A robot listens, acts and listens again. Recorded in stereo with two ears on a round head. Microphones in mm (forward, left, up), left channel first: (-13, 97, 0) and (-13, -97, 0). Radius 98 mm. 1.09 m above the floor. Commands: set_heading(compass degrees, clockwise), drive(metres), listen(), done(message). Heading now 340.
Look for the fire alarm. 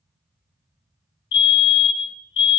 set_heading(285)
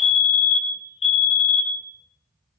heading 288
set_heading(258)
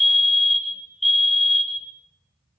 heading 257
done("Facing the fire alarm.")